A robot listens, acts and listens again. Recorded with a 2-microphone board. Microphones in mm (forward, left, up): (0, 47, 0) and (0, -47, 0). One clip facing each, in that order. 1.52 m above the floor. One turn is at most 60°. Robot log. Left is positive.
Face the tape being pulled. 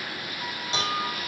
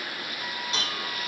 cmd idle
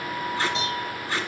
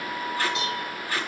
note: The tape being pulled: about 20° left or 160° left.
cmd yaw +20
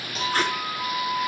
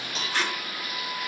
note: So it is at 135° left.
cmd yaw +60
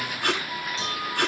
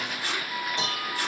note: The tape being pulled is now 65° left.
cmd yaw +60
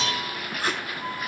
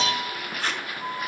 end: Facing the tape being pulled, 2 to 4 m away.